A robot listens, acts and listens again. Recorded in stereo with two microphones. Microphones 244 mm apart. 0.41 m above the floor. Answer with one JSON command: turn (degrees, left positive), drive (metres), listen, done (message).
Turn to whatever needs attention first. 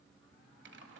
{"listen": true}
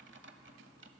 {"listen": true}
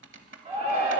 {"turn": -25}
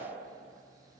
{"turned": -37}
{"listen": true}
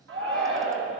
{"turn": -115}
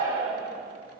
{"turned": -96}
{"turn": -15}
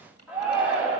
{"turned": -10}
{"done": "Found it: a shout, straight ahead."}